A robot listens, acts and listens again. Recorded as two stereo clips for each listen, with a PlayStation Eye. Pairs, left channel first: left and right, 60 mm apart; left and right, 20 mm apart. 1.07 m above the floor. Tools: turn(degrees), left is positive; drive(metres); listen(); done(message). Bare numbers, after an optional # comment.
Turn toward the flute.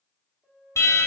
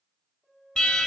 # The flute: about 15° right or 165° right.
turn(-15)
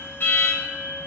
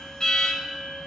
listen()
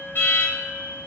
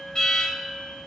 # So it is at 150° right.
turn(-150)
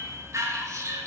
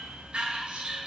listen()
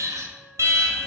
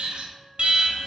listen()
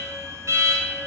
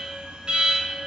done("I heard a flute from this way, but can't make it out now.")